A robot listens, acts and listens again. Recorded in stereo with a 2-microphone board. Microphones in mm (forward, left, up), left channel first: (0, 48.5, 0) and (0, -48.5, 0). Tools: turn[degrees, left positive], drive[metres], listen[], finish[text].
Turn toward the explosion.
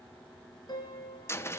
Action: listen[]
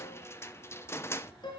Action: listen[]
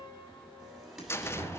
Action: turn[30]
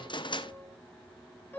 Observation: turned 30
Action: listen[]
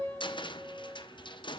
Action: finish[I heard an explosion, but can't make it out now. It was about 30° right or 150° left.]